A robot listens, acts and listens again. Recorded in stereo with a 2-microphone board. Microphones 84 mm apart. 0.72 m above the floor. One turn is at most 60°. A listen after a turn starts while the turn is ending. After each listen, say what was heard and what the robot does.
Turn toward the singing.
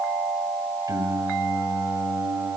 The singing: about 35° right or 145° right. Turn 35° right.
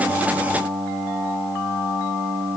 So it is at 50° left. Turn 50° left.
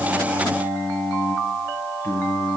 The singing is now 40° left. Turn 40° left.
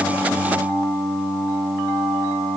The singing is now 15° left. Turn 15° left.
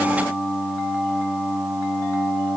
Facing the singing, 2 to 4 m away.